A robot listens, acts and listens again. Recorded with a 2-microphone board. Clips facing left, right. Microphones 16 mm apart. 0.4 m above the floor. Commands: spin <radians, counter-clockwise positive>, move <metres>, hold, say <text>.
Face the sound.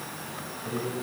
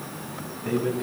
spin -1.05
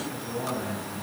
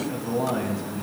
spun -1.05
spin -1.05
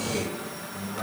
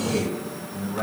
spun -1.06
spin -0.44
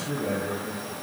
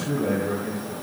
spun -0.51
spin -0.26
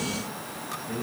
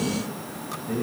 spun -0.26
spin -0.17
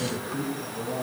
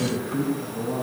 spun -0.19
say Facing the man speaking.